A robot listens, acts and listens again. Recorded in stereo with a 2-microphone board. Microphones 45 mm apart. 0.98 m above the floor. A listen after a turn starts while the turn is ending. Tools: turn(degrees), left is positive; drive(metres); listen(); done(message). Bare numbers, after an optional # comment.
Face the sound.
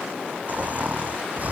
# The snoring: about 40° right or 140° right.
turn(-40)
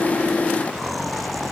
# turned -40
done("Found it: snoring, straight ahead.")